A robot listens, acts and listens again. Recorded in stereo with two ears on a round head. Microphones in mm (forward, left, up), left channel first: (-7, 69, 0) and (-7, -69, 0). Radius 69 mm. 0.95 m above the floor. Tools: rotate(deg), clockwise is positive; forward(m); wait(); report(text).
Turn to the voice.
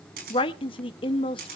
rotate(-35)
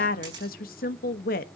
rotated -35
rotate(-110)
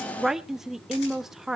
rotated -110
report("Facing the woman speaking, 1 to 2 m away.")